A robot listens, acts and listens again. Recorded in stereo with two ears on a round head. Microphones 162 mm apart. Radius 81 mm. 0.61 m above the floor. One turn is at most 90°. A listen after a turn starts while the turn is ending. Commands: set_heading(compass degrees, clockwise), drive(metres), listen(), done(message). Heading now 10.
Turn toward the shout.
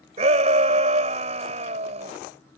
set_heading(50)
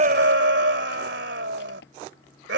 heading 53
set_heading(143)
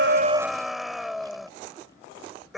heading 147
done("Facing the shout.")